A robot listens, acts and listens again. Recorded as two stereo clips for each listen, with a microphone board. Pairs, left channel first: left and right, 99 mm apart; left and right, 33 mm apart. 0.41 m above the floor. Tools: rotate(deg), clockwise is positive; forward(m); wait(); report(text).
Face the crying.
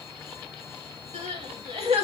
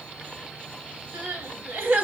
rotate(90)
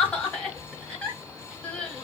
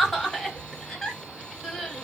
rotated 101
rotate(-10)
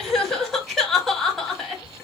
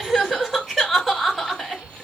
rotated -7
report("Found it: crying, straight ahead.")